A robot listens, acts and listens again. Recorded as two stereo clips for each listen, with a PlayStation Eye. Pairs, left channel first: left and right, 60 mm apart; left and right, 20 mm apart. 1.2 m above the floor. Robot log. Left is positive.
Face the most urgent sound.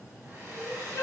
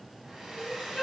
note: The crying: about 60° left or 120° left.
cmd yaw +60
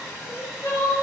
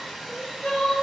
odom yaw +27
note: So it is at 85° left.
cmd yaw +85
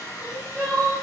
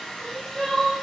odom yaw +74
note: The crying is now 10° left.
cmd yaw +10
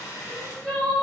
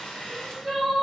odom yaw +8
end: Facing the crying, 1 to 2 m away.